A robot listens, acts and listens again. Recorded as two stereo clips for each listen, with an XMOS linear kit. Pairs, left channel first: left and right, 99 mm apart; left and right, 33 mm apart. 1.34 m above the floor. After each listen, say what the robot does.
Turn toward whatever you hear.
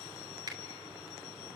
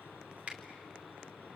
Turn 45° right.
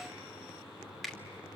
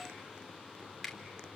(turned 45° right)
Found it: a finger snap, straight ahead.